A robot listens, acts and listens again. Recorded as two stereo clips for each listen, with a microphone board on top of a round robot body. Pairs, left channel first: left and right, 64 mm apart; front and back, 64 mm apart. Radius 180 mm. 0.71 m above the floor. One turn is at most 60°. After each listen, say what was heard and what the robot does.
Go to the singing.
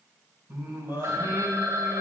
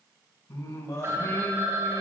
The singing: 30° right. Turn 30° right.
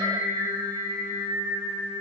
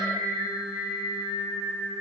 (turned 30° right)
Drive 1.0 m forward.
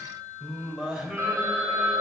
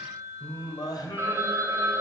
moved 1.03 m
The singing is now 10° right. Turn 10° right.
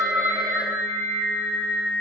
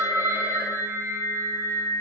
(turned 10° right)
Drive 1.0 m forward.
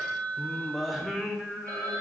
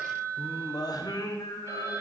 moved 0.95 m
Drive 1.0 m forward.
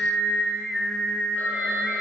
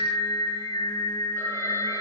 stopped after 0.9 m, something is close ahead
Arrived at the singing, straight ahead.